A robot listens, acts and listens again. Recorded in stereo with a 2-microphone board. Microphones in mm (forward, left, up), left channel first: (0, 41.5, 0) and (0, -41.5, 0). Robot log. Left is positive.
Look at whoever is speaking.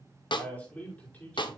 note: The man speaking: about 20° left or 160° left.
cmd yaw +20
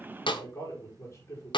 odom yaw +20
note: So it is at 140° left.
cmd yaw +140
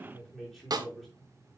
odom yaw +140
end: Facing the man speaking, over 4 m away.